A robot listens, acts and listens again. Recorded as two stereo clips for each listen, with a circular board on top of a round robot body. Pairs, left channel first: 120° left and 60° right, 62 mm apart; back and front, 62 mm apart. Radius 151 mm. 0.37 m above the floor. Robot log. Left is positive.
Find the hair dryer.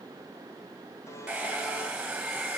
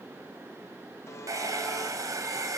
note: The hair dryer: 10° left.
cmd yaw +10
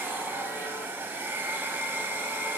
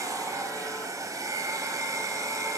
end: Found it: a hair dryer, straight ahead.